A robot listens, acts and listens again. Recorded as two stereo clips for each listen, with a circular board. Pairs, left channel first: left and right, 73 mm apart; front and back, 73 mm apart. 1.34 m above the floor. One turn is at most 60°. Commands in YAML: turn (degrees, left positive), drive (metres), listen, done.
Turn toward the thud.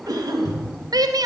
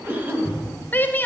turn: 60
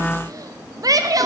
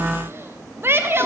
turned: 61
turn: 15
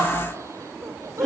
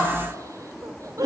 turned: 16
done: "Facing where the thud came from. I can't hear it now."